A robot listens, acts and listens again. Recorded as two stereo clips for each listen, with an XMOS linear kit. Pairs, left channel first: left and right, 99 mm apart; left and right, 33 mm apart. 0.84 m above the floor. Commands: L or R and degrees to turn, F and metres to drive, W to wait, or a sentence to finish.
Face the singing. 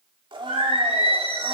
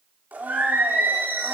R90
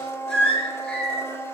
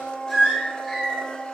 L10
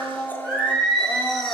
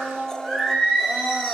Found it: singing, straight ahead, over 4 m away.